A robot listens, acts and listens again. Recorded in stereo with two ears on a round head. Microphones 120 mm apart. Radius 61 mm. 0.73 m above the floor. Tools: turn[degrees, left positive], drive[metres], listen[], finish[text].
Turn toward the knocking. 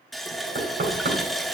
Thought: The knocking: about 75° right or 105° right.
Action: turn[-75]
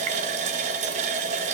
Action: listen[]
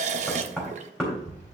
Action: finish[Facing the knocking, 2 to 4 m away.]